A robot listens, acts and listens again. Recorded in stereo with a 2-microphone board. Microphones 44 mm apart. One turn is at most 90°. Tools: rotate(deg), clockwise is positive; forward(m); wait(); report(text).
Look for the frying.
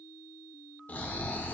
wait()
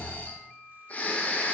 wait()
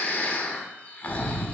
report("I can't make out frying to turn to.")